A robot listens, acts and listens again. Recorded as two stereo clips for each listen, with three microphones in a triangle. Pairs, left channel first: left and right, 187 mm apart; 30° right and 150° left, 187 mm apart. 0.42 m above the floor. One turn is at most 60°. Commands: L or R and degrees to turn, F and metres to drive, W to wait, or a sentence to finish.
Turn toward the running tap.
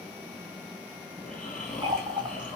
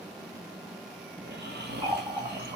R60
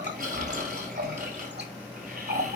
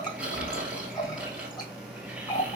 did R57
R60
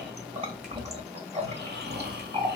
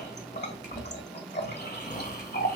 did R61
R35
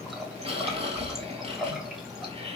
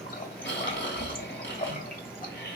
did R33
Facing the running tap.